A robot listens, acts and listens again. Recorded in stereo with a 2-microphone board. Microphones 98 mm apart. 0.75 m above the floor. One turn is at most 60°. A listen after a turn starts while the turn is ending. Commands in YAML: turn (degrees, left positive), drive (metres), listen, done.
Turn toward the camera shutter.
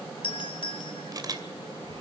turn: -40
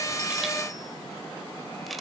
listen: true
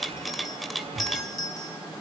done: "Facing the camera shutter."